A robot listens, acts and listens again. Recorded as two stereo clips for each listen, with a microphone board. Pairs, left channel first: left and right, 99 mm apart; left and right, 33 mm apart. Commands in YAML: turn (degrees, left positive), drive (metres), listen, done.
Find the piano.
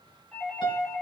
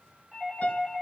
turn: 50
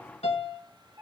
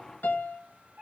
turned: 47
turn: 80
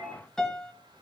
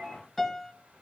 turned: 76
done: "Found it: a piano, straight ahead."